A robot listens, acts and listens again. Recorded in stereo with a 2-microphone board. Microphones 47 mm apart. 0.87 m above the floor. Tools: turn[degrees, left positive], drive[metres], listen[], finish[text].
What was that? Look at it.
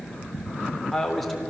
Action: turn[30]
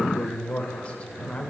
Thought: So it is at 155° left.
Action: turn[155]
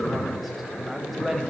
Action: finish[Found it: a man speaking, straight ahead.]